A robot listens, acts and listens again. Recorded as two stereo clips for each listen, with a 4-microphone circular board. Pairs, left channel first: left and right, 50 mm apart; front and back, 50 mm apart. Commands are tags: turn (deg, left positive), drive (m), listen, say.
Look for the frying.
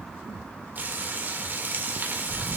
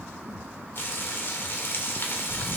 <turn deg="-40"/>
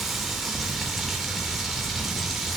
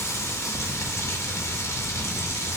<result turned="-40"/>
<say>Found it: frying, straight ahead, 2 to 4 m away.</say>